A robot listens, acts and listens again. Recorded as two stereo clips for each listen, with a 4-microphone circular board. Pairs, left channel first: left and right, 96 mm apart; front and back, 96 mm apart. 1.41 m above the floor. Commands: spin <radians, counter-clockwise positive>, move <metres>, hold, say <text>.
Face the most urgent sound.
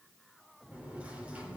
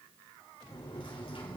hold
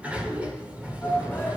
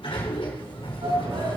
spin 2.71
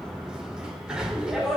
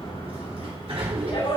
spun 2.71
say Facing the shout.